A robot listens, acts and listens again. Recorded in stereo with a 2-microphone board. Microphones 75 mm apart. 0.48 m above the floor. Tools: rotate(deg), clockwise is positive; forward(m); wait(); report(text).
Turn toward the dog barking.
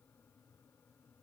wait()
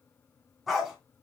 rotate(30)
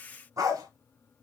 rotate(130)
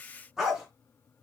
report("Facing the dog barking.")